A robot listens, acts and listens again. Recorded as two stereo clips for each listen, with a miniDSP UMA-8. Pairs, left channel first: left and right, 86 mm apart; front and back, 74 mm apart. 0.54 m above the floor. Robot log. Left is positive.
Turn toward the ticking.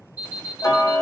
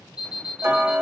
note: The ticking: 130° left.
cmd yaw +130
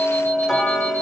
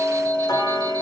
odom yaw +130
end: Facing the ticking.